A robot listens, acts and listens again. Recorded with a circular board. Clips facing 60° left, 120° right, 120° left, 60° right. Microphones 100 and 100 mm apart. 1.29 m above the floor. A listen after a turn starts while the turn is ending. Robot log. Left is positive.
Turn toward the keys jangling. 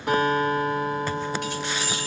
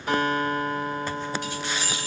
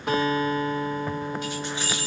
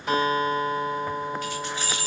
note: The keys jangling: 60° left.
cmd yaw +60
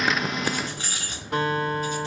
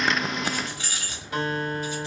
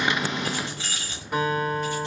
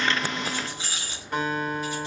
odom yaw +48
note: The keys jangling is now 15° left.
cmd yaw +15
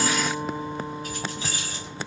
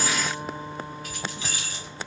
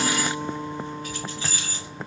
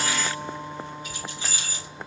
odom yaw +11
note: The keys jangling is now 10° left.
cmd yaw +10
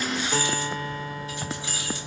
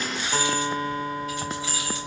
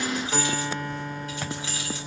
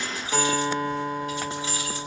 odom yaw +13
end: Found it: keys jangling, straight ahead, 2 to 4 m away.